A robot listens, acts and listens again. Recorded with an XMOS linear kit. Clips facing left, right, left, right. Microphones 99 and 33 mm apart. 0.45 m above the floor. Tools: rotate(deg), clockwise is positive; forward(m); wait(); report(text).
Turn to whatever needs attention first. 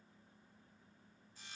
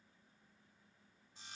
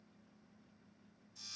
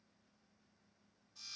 wait()
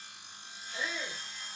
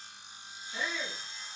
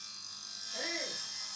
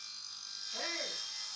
rotate(70)
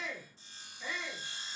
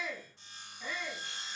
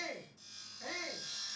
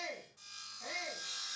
report("Found it: a shout, straight ahead, over 4 m away.")